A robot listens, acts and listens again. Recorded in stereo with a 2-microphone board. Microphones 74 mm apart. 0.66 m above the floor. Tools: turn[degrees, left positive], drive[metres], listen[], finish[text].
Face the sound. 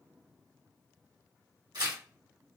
Thought: The tearing paper: about 70° right or 110° right.
Action: turn[-70]
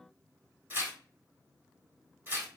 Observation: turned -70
Thought: So it is at 30° right.
Action: turn[-30]
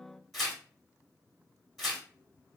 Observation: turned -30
Action: finish[Facing the tearing paper.]